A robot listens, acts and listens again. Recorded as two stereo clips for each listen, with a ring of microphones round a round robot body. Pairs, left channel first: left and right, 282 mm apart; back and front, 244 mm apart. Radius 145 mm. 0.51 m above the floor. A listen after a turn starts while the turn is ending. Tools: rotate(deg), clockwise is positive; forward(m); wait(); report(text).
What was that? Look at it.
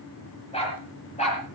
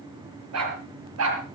rotate(-25)
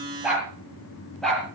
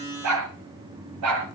report("Found it: a dog barking, straight ahead.")